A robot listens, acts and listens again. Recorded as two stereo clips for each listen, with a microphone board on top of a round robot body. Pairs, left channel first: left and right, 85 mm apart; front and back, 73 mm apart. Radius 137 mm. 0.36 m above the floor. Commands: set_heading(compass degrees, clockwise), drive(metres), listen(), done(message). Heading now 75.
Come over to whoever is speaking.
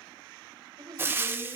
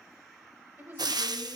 set_heading(200)
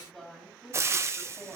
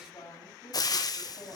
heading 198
drive(1.0)
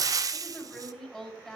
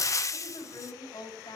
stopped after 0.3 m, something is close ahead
done("Blocked. The woman speaking is further on, straight ahead.")